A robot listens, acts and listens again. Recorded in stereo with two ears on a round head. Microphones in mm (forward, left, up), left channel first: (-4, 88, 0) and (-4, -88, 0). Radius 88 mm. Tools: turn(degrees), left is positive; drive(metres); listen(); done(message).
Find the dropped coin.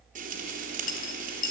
turn(degrees=45)
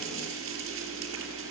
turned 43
listen()
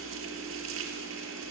done("I heard a dropped coin, but can't make it out now. It was about straight ahead or 95° left.")